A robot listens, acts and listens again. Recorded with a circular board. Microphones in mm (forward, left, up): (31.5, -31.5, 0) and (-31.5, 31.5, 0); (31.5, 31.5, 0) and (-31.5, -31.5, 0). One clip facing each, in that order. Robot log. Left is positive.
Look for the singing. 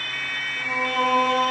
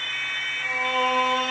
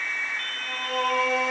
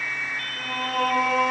note: The singing: 110° right.
cmd yaw -110
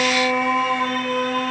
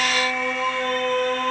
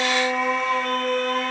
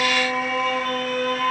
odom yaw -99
note: The singing is now 25° right.
cmd yaw -25
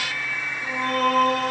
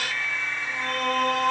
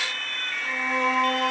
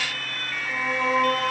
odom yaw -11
note: The singing is now 25° right.
cmd yaw -25
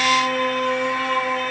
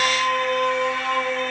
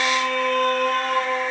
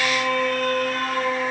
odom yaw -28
end: Facing the singing.